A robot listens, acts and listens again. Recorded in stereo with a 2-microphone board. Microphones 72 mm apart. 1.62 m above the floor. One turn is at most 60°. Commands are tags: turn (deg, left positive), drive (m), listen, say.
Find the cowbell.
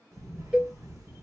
<turn deg="-30"/>
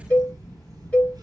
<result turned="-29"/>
<turn deg="15"/>
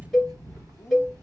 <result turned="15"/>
<say>Facing the cowbell.</say>